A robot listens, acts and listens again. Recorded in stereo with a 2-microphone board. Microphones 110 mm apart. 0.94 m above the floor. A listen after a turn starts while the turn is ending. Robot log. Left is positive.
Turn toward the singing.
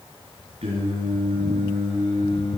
note: The singing: about 65° right or 115° right.
cmd yaw -65
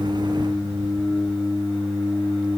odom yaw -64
end: Facing the singing, over 4 m away.